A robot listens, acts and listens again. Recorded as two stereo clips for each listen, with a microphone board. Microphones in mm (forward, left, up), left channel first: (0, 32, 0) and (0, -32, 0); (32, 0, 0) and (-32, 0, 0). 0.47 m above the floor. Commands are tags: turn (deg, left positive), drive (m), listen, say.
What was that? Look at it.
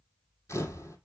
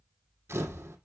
<turn deg="130"/>
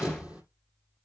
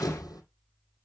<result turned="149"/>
<turn deg="-20"/>
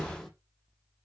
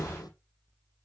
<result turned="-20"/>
<say>Found it: a camera shutter, straight ahead, 2 to 4 m away.</say>